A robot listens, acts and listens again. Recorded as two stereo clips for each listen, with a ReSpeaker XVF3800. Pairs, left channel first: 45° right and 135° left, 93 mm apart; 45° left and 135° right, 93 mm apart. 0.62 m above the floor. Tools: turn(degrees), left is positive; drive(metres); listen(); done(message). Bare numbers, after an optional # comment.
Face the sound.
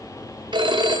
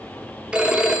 # The phone ringing: 145° left.
turn(145)
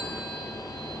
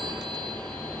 listen()
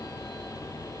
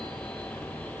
listen()
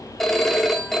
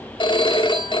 # The phone ringing is now 40° left.
turn(40)
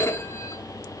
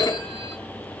# The phone ringing is now 10° left.
turn(10)
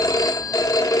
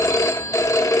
done("Found it: a phone ringing, straight ahead, 1 to 2 m away.")